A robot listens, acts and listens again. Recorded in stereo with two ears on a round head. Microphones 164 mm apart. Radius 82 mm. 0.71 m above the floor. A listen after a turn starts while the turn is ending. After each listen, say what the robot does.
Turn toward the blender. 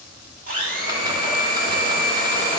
Turn 50° right.
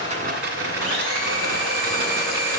Turn 65° right.
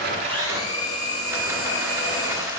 Turn 25° left.
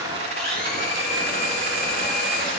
Found it: a blender, straight ahead.